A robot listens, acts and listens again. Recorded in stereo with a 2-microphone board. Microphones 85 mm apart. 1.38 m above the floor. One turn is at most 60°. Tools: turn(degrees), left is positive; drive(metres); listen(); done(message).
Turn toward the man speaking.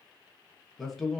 turn(degrees=30)
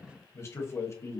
turn(degrees=60)
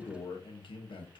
turn(degrees=60)
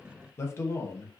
turn(degrees=35)
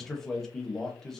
done("Found it: a man speaking, straight ahead, 1 to 2 m away.")